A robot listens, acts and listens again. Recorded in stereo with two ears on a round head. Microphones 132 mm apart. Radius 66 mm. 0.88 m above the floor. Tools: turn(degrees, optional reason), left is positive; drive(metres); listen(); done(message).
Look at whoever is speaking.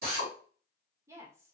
turn(degrees=-20, reason="The woman speaking: about 20° right or 160° right.")
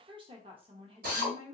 turn(degrees=-140, reason="So it is at 140° right.")
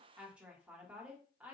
turn(degrees=-10, reason="The woman speaking is now 10° right.")
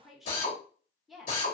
done("Facing the woman speaking, under 1 m away.")